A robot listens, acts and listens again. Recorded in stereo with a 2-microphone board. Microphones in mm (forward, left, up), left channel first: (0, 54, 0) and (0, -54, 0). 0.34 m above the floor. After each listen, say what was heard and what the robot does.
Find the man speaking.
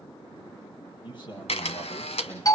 The man speaking: about 50° left or 130° left. Turn 50° left.
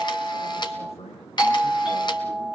So it is at 70° left. Turn 70° left.
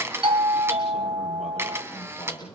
Found it: a man speaking, straight ahead, over 4 m away.